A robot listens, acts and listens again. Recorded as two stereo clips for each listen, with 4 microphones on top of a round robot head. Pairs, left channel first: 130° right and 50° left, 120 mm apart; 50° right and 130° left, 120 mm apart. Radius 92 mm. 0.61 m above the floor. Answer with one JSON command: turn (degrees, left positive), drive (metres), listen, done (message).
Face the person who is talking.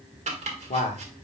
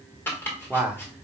{"turn": -150}
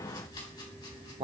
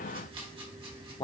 {"done": "Facing the man speaking."}